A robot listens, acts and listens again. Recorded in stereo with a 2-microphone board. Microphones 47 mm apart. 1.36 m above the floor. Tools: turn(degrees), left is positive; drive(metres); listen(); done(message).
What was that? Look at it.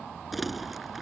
turn(degrees=-30)
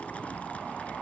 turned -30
listen()
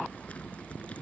turn(degrees=25)
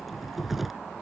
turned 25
done("Found it: crumpling, straight ahead.")